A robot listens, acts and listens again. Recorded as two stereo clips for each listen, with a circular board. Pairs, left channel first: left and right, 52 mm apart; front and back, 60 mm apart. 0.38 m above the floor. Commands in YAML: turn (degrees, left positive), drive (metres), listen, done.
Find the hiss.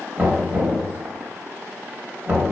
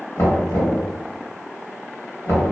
listen: true
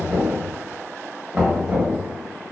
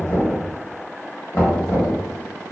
listen: true
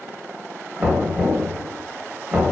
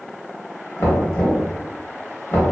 done: "I can't make out a hiss to turn to."